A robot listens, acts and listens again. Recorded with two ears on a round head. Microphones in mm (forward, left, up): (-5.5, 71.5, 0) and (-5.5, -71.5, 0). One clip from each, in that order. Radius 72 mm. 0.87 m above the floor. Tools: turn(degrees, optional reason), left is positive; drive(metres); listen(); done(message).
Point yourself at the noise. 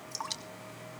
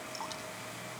turn(degrees=35, reason="The dripping: about 35° left or 145° left.")
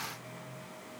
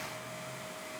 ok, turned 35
listen()
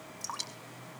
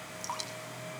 done("Facing the dripping, 2 to 4 m away.")